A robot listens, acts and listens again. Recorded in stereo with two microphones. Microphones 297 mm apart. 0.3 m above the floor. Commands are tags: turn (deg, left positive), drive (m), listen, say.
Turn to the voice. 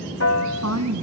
<turn deg="-60"/>
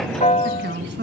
<turn deg="-40"/>
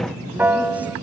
<listen/>
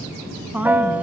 <say>Facing the woman speaking.</say>